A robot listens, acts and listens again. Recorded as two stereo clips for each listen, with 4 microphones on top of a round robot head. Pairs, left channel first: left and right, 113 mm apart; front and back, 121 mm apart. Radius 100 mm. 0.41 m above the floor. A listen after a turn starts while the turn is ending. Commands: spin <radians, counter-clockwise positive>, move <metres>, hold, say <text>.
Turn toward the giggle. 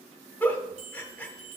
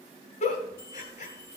spin 0.26
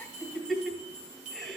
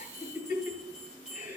say Facing the giggle.